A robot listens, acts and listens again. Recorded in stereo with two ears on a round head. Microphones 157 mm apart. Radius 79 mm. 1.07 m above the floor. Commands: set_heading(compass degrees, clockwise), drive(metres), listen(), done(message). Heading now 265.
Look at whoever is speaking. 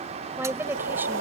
set_heading(295)
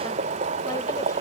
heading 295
listen()
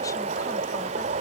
listen()
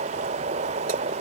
done("I heard a woman speaking, but can't make it out now. It was about 20° left or 140° right.")